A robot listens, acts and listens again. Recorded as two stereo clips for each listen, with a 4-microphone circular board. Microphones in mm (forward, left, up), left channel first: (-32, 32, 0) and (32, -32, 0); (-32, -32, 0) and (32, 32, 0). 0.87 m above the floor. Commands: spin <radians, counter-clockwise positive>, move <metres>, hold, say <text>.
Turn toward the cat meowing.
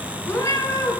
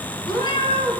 spin -2.79
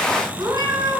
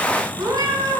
say Found it: a cat meowing, straight ahead, over 4 m away.